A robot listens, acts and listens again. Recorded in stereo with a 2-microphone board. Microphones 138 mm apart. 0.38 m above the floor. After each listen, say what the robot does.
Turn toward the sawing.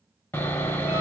Turn 20° left.
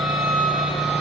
Found it: sawing, straight ahead, under 1 m away.